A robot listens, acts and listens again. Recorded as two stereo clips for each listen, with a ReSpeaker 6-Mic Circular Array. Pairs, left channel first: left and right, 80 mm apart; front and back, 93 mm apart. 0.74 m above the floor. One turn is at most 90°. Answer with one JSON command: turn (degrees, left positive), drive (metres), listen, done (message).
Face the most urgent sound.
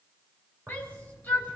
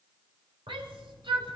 {"turn": 90}
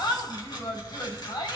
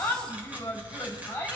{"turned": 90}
{"turn": 65}
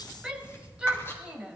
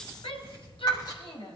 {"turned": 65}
{"turn": -10}
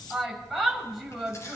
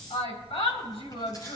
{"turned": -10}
{"done": "Found it: a shout, straight ahead."}